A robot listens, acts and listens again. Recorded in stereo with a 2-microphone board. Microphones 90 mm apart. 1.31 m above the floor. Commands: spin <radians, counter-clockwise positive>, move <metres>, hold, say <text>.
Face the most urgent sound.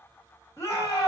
spin 0.61
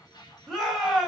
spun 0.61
say Found it: a shout, straight ahead, 2 to 4 m away.